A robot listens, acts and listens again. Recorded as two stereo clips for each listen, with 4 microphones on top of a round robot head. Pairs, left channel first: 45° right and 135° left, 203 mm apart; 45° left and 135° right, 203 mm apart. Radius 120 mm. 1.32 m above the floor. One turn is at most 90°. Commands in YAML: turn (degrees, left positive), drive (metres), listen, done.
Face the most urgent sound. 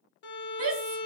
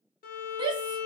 turn: 90
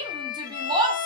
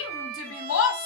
turn: 65
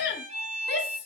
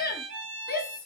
done: "Found it: a shout, straight ahead."